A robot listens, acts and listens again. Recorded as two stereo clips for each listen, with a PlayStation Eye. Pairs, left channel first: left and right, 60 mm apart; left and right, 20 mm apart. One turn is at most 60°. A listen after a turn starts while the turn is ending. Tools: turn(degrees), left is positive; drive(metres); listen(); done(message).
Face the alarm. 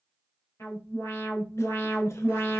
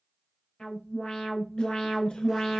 turn(degrees=60)
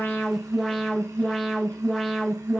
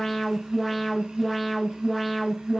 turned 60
done("Found it: an alarm, straight ahead.")